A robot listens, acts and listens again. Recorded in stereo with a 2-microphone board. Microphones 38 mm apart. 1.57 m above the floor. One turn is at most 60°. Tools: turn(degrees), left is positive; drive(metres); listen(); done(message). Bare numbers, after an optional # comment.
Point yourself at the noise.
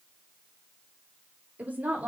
# The woman speaking: about 45° right or 135° right.
turn(-45)
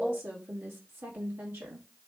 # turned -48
# So it is at 80° right.
turn(-60)
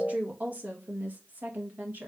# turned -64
# The woman speaking is now 55° right.
turn(-55)
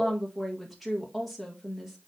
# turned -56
done("Facing the woman speaking, 1 to 2 m away.")